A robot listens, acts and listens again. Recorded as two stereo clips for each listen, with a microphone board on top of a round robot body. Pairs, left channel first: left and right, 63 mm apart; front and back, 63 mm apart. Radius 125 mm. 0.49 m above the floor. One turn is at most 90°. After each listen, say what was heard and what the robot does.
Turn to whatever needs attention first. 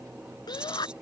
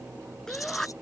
The shout: 85° left. Turn 85° left.
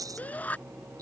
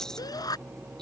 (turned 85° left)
The shout is now 20° left. Turn 20° left.
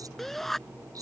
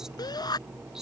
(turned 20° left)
Facing the shout.